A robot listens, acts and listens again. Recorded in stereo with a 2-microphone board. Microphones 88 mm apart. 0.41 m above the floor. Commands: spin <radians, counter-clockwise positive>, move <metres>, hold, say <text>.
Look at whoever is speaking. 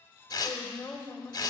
spin 0.35
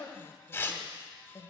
spin 2.27
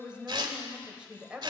spin -0.26
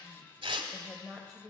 say Facing the woman speaking, 1 to 2 m away.